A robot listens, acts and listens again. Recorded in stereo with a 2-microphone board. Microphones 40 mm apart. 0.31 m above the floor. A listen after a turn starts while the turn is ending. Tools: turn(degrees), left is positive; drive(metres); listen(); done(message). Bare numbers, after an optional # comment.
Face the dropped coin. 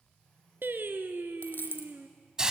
# The dropped coin: about 60° left or 120° left.
turn(60)
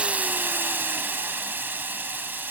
listen()
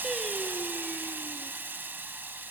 done("I heard a dropped coin, but can't make it out now. It was about straight ahead or 60° left.")